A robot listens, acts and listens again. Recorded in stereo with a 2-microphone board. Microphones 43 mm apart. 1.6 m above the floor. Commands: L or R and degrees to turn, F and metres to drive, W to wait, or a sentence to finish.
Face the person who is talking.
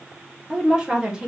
R20
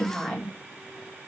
Facing the woman speaking, 2 to 4 m away.